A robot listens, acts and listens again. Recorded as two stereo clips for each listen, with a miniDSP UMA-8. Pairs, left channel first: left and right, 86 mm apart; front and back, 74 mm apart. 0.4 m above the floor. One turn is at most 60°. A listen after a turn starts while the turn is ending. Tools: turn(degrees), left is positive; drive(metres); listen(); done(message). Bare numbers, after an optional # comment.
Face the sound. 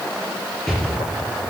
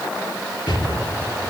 done("Facing the explosion.")